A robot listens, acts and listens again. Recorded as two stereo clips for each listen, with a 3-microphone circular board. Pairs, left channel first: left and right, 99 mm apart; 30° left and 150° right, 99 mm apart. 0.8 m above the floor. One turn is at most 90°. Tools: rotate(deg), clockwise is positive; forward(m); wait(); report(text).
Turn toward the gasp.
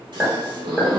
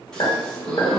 rotate(55)
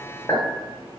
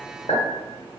report("Facing where the gasp came from. I can't hear it now.")